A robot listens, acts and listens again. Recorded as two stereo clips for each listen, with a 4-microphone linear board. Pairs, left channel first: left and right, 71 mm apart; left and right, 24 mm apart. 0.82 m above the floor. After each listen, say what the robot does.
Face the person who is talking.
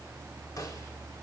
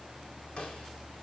Keep listening.
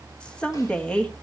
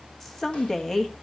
Turn 30° left.
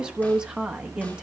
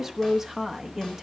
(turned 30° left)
Turn 15° right.
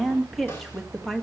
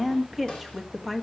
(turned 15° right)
Facing the woman speaking.